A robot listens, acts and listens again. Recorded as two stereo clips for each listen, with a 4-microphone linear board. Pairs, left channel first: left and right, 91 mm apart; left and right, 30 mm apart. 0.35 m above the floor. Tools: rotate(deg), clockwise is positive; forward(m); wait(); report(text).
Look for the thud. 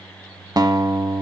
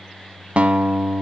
wait()
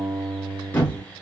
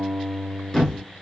rotate(-20)
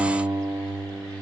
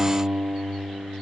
wait()
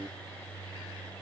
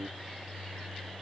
report("I heard a thud, but can't make it out now. It was about straight ahead or 140° left.")